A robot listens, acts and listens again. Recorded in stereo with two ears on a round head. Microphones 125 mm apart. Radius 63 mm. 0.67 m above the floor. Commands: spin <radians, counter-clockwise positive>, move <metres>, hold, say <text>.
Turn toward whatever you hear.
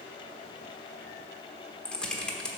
spin 0.52
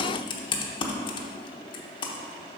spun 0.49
spin 2.53
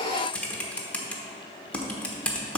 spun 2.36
spin 0.17
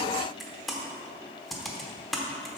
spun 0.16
say Found it: typing on a keyboard, straight ahead.